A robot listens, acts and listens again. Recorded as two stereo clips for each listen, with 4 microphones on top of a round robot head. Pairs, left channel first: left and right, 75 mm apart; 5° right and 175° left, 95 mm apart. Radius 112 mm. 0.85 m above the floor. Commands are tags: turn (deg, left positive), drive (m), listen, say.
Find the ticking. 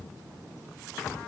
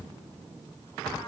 <listen/>
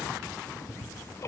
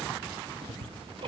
<turn deg="145"/>
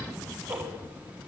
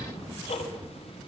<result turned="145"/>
<turn deg="-20"/>
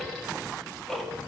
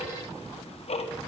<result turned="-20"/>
<say>Facing the ticking.</say>